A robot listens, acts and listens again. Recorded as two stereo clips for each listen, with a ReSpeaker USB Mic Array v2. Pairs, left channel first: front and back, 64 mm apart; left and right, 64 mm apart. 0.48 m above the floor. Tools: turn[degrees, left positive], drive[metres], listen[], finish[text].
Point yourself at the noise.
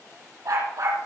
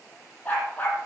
Thought: The dog barking: 155° left.
Action: turn[155]
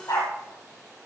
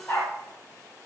Thought: The dog barking is now 35° left.
Action: turn[35]
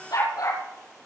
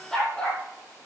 Thought: The dog barking is now 10° left.
Action: turn[10]
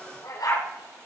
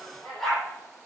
Action: finish[Found it: a dog barking, straight ahead.]